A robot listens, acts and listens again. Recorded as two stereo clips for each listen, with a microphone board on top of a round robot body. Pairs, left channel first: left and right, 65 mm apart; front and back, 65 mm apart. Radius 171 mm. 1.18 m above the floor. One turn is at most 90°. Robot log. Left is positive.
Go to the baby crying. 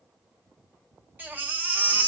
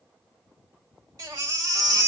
note: The baby crying: 155° right.
cmd yaw -90
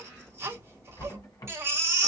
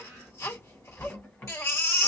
note: The baby crying is now 45° right.
cmd yaw -45
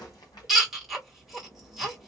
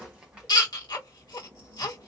cmd fwd 1.0
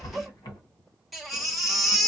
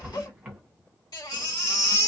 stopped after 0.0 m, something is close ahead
end: Something is in my way. I am facing the baby crying but have not reached it.